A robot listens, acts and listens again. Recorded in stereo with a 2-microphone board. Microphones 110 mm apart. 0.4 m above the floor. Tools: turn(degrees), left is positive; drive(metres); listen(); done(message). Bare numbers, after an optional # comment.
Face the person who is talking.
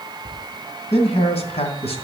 # The man speaking: about 65° left or 115° left.
turn(65)
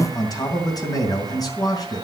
# So it is at 35° left.
turn(35)
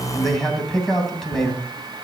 done("Found it: a man speaking, straight ahead.")